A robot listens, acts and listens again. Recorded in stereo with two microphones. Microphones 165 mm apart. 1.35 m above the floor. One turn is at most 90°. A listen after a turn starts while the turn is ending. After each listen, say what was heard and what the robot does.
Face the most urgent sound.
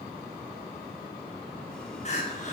The crying: about 40° left or 140° left. Turn 40° left.
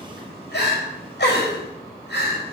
So it is at 100° left. Turn 90° left.
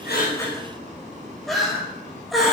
Found it: crying, straight ahead.